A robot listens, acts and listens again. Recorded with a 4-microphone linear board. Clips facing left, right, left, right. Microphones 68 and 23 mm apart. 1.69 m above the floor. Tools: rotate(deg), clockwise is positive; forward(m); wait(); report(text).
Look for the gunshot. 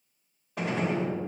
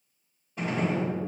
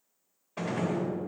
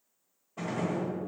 rotate(-90)
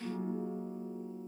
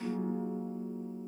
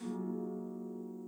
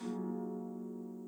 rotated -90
report("Facing where the gunshot came from. I can't hear it now.")